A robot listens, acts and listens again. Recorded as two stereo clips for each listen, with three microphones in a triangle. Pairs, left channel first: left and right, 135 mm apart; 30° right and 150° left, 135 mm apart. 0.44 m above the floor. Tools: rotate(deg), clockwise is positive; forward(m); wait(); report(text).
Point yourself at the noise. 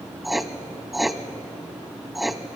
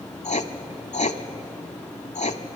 report("Facing the writing, under 1 m away.")